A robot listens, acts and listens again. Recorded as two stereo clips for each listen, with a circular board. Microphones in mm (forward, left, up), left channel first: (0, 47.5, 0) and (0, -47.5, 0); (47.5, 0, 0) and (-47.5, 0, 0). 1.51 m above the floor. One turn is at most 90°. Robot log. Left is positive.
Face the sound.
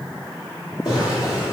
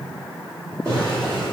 note: The drawer: 135° left.
cmd yaw +90
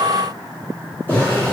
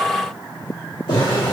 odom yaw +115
note: The drawer is now 20° left.
cmd yaw +20
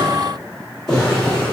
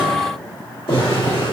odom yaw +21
end: Facing the drawer.